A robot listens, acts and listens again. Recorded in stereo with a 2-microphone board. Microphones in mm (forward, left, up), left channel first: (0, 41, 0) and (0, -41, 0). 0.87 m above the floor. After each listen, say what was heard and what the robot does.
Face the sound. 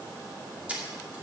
The camera shutter: about 20° right or 160° right. Turn 20° right.
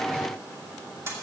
So it is at 140° right. Turn 140° right.
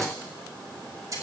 The camera shutter is now 50° right. Turn 50° right.
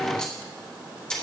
The camera shutter is now 10° left. Turn 10° left.
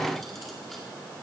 Keep listening.
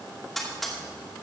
Facing the camera shutter, 2 to 4 m away.